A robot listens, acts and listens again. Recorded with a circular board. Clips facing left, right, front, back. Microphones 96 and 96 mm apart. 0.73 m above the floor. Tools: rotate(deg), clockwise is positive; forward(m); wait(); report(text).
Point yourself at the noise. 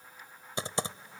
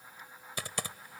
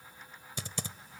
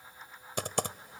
rotate(-155)
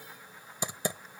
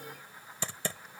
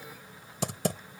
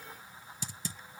rotate(-20)
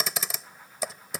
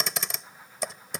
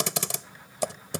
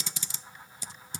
report("Found it: typing on a keyboard, straight ahead.")